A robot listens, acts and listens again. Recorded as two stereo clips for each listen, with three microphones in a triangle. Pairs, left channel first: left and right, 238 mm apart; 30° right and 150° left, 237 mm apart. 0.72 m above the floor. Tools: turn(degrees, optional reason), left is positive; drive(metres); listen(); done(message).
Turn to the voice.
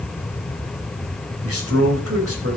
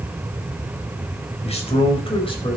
turn(degrees=-100, reason="The man speaking: 100° right.")
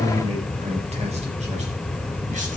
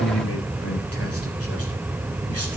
turn(degrees=-25, reason="The man speaking is now 25° right.")
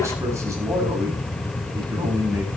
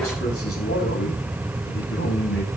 turn(degrees=-15, reason="The man speaking is now 15° right.")
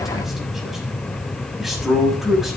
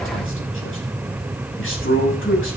done("Found it: a man speaking, straight ahead.")